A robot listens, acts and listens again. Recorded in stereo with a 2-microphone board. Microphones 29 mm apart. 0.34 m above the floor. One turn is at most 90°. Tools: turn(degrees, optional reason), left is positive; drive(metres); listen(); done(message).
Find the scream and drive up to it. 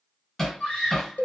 turn(degrees=50, reason="The scream: about 50° left or 130° left.")
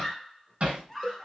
turn(degrees=10, reason="So it is at 10° left.")
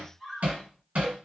drive(metres=1.0)
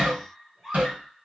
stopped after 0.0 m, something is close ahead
done("Blocked. The scream is further on, straight ahead.")